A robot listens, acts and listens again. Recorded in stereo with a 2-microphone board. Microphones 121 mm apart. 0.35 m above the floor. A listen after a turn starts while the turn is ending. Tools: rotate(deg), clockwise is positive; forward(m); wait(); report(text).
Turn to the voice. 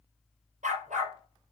wait()
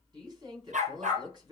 rotate(40)
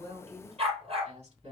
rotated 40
rotate(100)
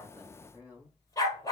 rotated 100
rotate(15)
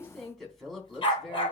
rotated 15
report("Found it: a woman speaking, straight ahead, 2 to 4 m away.")